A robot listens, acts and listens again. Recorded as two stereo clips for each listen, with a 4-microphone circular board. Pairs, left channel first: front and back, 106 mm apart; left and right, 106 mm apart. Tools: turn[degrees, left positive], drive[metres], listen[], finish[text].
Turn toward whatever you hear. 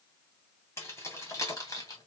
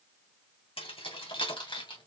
Thought: The keys jangling: 55° left.
Action: turn[55]
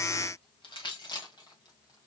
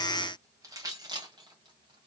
Thought: The keys jangling is now 45° right.
Action: turn[-45]
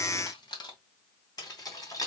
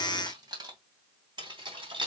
Thought: The keys jangling is now 55° right.
Action: turn[-55]
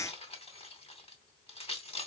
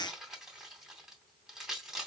Action: finish[Facing the keys jangling.]